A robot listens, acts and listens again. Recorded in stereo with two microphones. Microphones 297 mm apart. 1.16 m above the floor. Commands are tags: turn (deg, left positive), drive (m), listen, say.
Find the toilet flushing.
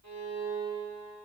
<listen/>
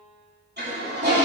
<turn deg="-35"/>
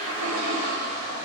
<turn deg="-105"/>
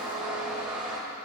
<say>Facing the toilet flushing, 2 to 4 m away.</say>